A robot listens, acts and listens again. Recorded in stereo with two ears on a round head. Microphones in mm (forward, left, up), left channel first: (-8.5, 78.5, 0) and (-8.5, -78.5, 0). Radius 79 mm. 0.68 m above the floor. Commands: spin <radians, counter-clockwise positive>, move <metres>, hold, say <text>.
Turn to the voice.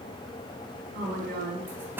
spin -0.87
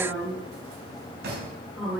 say Facing the woman speaking, over 4 m away.